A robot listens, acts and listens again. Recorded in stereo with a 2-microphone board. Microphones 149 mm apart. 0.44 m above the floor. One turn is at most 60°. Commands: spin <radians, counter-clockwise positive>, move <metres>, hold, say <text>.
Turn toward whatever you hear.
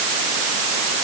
hold
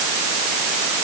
hold
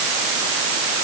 say I can't make out anything to turn to.